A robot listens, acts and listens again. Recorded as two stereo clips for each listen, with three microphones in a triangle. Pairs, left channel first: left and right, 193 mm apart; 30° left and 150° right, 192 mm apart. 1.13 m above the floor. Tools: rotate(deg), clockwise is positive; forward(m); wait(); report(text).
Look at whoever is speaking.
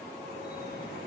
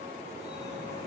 wait()
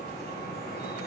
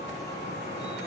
wait()
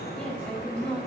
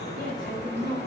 report("Facing the woman speaking, over 4 m away.")